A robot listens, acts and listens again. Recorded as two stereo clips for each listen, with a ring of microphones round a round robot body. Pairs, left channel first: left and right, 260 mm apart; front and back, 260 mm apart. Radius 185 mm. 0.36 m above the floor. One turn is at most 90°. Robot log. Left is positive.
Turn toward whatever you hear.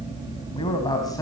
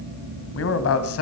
note: The man speaking: 10° left.
cmd yaw +10
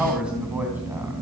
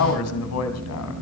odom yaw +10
end: Facing the man speaking, 2 to 4 m away.